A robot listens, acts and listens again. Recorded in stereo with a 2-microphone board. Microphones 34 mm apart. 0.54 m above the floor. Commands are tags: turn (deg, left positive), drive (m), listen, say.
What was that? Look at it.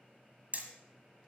<turn deg="-50"/>
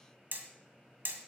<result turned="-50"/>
<turn deg="-85"/>
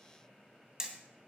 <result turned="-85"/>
<turn deg="-20"/>
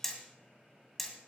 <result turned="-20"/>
<say>Facing the hammering.</say>